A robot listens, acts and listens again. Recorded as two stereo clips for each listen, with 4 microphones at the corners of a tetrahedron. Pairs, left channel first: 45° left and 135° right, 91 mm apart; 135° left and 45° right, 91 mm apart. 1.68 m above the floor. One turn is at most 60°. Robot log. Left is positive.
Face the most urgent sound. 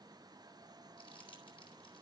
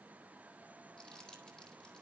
cmd idle
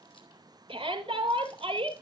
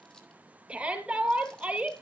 note: The shout: 120° right.
cmd yaw -60
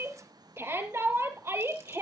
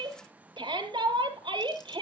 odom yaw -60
note: The shout is now 70° right.
cmd yaw -60
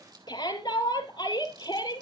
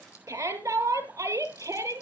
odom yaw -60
note: The shout is now 10° left.
cmd yaw +10
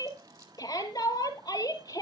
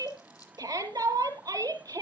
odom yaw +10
end: Facing the shout, 2 to 4 m away.